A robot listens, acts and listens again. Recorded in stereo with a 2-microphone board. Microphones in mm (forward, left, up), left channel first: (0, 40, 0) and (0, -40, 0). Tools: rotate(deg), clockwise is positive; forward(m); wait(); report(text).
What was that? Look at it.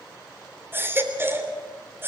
rotate(30)
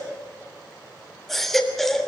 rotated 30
report("Facing the baby crying, 2 to 4 m away.")